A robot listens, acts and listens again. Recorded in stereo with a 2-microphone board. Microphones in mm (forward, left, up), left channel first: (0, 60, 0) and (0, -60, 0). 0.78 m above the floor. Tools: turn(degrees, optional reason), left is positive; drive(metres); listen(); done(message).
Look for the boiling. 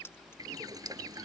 turn(degrees=-30, reason="The boiling: about 30° right or 150° right.")
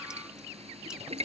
turn(degrees=-120, reason="So it is at 120° right.")
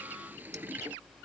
turn(degrees=-15, reason="The boiling is now 15° right.")
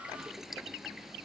done("Found it: boiling, straight ahead.")